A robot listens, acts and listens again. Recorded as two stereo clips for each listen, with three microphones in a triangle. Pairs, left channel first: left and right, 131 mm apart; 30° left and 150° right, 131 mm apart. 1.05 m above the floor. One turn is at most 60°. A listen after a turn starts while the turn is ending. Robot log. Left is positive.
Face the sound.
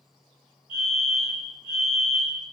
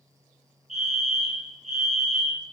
note: The fire alarm: 165° right.
cmd yaw -60
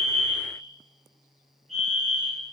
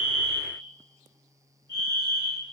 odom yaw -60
note: The fire alarm is now 105° right.
cmd yaw -60
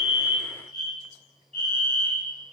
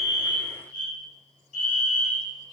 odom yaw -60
note: The fire alarm is now 65° right.
cmd yaw -60
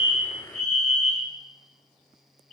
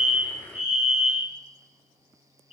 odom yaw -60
end: Found it: a fire alarm, straight ahead, 2 to 4 m away.